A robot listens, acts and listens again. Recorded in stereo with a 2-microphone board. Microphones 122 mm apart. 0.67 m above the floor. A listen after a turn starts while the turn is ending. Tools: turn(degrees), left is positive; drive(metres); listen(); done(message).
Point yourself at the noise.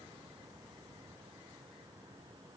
listen()
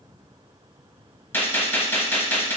turn(degrees=20)
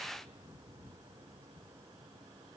listen()
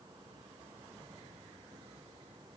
done("I heard a gunshot, but can't make it out now. It was about straight ahead or 140° left.")